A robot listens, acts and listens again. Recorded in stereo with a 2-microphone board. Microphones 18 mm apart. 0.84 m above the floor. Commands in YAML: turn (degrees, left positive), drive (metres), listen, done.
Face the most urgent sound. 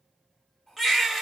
turn: -30
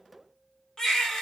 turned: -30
turn: 30
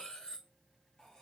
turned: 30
listen: true
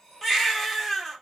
done: "Found it: a baby crying, straight ahead, 1 to 2 m away."